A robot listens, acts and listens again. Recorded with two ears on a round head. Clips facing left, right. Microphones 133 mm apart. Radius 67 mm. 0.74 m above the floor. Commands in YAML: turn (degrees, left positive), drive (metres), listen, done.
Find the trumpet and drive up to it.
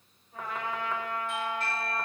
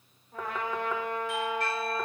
turn: -45
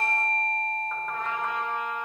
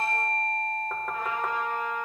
drive: 1.0
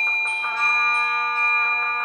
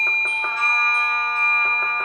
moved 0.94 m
listen: true
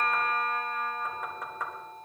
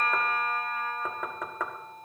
listen: true
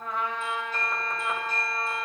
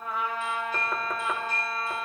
drive: 1.0
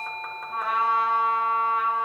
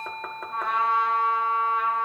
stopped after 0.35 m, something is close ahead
done: "Arrived at the trumpet, straight ahead."